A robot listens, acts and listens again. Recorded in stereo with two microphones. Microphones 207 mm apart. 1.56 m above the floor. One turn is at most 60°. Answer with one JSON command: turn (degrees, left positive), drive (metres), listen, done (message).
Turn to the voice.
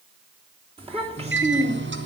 {"turn": -35}
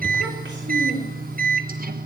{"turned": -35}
{"turn": -60}
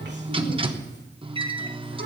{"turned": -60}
{"turn": -40}
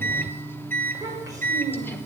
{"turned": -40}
{"turn": -15}
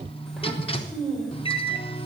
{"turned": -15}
{"done": "Facing the child speaking, over 4 m away."}